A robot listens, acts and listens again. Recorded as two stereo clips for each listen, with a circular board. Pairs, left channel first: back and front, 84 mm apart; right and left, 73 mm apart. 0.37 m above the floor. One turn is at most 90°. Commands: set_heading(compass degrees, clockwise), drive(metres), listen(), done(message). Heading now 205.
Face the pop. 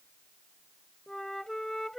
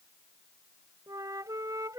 listen()
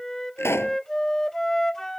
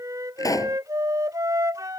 set_heading(295)
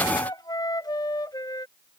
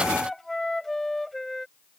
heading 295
set_heading(325)
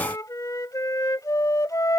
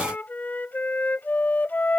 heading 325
done("I heard a pop from this way, but can't make it out now.")